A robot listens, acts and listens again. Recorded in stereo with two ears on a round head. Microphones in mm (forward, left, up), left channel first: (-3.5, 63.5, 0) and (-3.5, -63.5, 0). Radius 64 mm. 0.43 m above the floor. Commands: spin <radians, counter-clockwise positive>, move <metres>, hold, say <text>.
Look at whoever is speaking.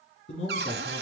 spin 0.87
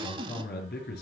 spin 1.40
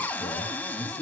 hold
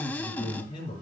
spin 0.52
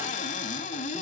hold
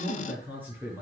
spin -0.26
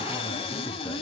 hold
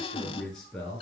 say Facing the man speaking, over 4 m away.